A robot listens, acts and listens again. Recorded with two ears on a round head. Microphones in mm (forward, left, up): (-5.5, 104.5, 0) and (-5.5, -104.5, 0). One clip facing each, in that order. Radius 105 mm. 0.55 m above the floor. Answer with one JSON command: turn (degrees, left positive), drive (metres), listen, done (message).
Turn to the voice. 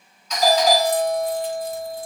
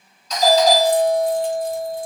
{"listen": true}
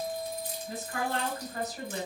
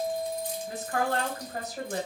{"turn": -55}
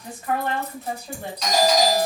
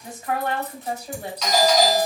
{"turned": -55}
{"turn": -10}
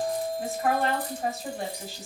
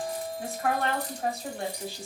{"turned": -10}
{"done": "Found it: a woman speaking, straight ahead."}